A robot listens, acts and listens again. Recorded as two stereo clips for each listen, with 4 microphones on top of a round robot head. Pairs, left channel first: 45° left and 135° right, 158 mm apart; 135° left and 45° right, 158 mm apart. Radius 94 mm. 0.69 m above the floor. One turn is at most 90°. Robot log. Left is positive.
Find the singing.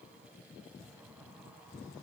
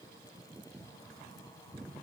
cmd idle
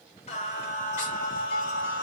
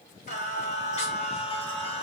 note: The singing: 80° left.
cmd yaw +80
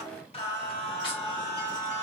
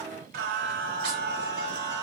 note: The singing is now 25° right.
cmd yaw -25
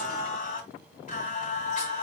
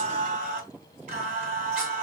end: Found it: singing, straight ahead.